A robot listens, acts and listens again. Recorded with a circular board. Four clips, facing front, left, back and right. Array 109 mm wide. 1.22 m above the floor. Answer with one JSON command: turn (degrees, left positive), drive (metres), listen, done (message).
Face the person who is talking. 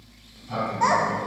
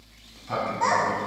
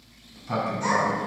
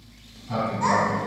{"turn": 25}
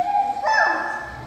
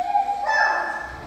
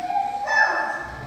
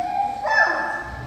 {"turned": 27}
{"done": "Facing the child speaking."}